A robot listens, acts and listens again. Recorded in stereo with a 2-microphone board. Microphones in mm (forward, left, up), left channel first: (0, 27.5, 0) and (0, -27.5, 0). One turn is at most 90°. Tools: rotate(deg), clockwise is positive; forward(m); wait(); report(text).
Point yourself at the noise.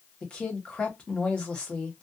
rotate(-20)
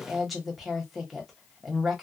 report("Facing the woman speaking.")